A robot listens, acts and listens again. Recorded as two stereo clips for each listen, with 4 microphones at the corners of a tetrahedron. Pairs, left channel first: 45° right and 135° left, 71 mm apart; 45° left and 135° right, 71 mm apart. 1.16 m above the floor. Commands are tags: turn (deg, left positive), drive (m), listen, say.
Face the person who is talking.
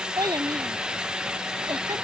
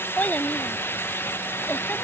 <turn deg="115"/>
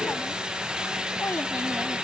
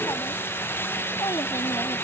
<turn deg="15"/>
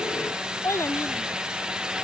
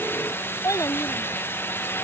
<say>Facing the child speaking.</say>